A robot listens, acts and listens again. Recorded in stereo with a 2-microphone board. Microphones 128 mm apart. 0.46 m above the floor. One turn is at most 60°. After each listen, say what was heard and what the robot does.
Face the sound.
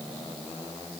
Keep listening.
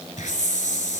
Turn 60° left.
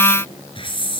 So it is at 40° left. Turn 40° left.
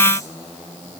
Keep listening.
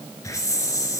The hiss is now 25° left. Turn 25° left.
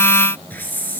The hiss is now 15° left. Turn 15° left.
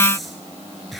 Found it: a hiss, straight ahead.